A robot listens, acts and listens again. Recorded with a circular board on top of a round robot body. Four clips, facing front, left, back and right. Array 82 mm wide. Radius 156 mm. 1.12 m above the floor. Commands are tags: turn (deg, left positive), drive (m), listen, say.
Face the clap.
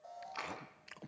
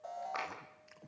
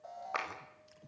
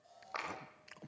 <turn deg="180"/>
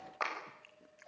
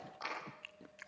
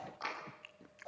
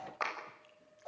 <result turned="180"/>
<turn deg="-45"/>
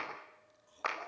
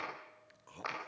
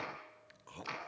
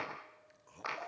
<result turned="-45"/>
<say>Found it: a clap, straight ahead.</say>